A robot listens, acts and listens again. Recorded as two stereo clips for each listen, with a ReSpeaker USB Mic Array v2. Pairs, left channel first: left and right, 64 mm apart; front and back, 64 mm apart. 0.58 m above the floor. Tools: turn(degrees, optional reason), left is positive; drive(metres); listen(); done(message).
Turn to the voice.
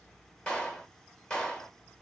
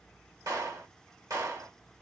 listen()
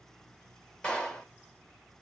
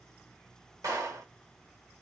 listen()
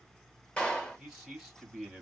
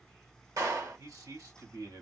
turn(degrees=175, reason="The man speaking: 175° left.")
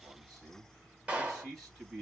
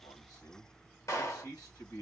turn(degrees=-15, reason="The man speaking is now 15° right.")
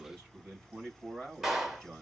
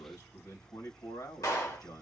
done("Found it: a man speaking, straight ahead.")